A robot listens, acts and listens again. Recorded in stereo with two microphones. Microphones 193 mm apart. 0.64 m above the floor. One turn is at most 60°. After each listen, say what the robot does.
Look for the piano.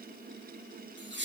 Keep listening.
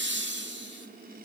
Keep listening.
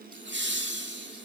I can't make out a piano, only laughter.